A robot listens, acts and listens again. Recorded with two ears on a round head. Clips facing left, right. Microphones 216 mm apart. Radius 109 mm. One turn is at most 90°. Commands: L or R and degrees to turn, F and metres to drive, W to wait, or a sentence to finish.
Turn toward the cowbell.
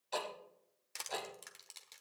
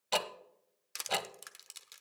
W
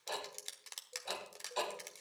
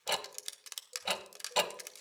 W
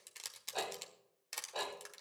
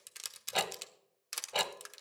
I can't make out a cowbell, only ticking and crushing.